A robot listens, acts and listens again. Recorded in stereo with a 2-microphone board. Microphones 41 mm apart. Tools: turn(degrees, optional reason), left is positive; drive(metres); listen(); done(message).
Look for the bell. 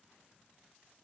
listen()
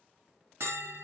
turn(degrees=-90)
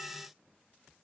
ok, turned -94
listen()
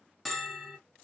done("Found it: a bell, straight ahead.")